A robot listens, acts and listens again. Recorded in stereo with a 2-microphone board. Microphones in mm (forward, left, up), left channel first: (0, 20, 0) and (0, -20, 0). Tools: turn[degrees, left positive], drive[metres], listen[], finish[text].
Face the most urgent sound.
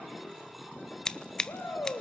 Action: turn[90]
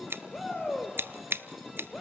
Thought: So it is at 10° left.
Action: turn[10]
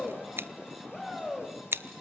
Action: finish[Facing the shout, over 4 m away.]